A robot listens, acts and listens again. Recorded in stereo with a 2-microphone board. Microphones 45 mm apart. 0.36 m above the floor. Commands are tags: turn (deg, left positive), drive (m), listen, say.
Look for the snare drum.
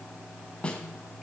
<turn deg="25"/>
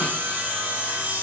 <listen/>
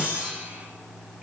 <listen/>
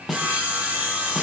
<say>Found it: a snare drum, straight ahead.</say>